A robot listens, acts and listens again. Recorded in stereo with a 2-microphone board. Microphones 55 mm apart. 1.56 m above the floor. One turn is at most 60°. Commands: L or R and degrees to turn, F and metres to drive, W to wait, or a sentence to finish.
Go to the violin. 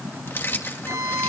R60
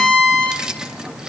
R20
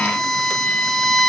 F1.0
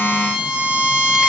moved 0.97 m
R10
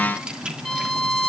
F1.0
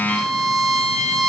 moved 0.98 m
F1.0
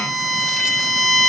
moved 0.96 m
F1.0
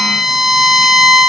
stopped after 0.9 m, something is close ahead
Arrived at the violin, straight ahead.